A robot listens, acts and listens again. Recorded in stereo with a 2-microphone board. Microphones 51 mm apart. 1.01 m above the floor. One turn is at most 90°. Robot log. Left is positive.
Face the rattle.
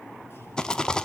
cmd yaw +30
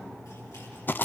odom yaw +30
note: So it is at 130° left.
cmd yaw +90
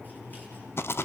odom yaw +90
note: The rattle is now 70° left.
cmd yaw +70
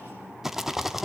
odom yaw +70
end: Found it: a rattle, straight ahead.